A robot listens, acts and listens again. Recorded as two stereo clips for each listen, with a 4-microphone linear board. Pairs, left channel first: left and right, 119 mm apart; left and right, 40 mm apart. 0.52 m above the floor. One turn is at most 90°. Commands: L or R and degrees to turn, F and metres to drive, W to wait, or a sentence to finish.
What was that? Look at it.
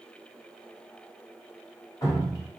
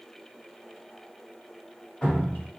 L30
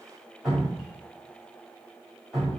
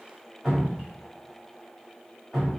Found it: dripping, straight ahead, 1 to 2 m away.